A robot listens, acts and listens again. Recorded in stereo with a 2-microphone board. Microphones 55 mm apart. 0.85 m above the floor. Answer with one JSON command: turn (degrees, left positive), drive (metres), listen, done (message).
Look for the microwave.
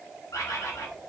{"listen": true}
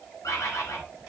{"listen": true}
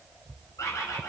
{"done": "I can't make out a microwave, only a bird."}